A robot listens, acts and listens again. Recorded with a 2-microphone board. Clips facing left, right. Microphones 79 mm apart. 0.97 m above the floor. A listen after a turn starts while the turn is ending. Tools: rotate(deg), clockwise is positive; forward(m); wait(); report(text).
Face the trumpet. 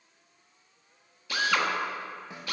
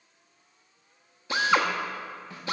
wait()
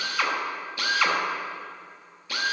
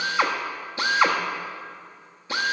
wait()
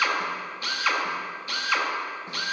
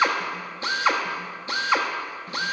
report("I can't make out a trumpet to turn to.")